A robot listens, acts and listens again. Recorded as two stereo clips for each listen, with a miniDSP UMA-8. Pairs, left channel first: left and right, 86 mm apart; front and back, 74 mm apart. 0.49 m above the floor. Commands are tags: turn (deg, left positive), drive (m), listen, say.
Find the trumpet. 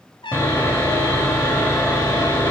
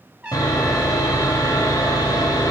<turn deg="110"/>
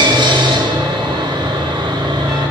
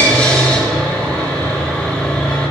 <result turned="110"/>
<listen/>
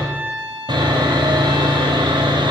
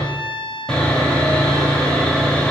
<say>Facing the trumpet.</say>